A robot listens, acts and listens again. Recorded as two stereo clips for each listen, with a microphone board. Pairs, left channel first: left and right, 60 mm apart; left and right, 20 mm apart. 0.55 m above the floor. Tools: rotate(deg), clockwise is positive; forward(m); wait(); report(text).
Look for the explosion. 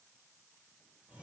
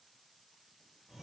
wait()
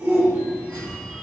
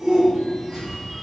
rotate(35)
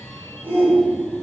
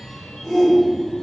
wait()
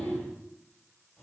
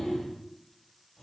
report("I heard an explosion, but can't make it out now. It was about straight ahead or 110° right.")